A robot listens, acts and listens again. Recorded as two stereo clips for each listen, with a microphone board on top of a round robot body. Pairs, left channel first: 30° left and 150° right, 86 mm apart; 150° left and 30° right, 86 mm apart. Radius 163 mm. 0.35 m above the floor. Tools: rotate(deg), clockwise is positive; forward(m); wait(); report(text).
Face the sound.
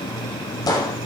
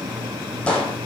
rotate(-70)
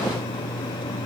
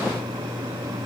report("I heard a gunshot from this way, but can't make it out now.")